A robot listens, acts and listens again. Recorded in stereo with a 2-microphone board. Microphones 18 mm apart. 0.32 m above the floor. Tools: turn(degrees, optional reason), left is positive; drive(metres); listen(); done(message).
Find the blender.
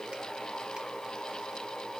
listen()
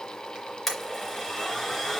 turn(degrees=30)
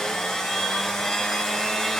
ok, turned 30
turn(degrees=145, reason="So it is at 145° left.")
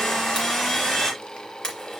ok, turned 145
turn(degrees=35, reason="The blender is now 35° left.")
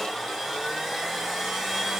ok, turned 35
done("Found it: a blender, straight ahead, 2 to 4 m away.")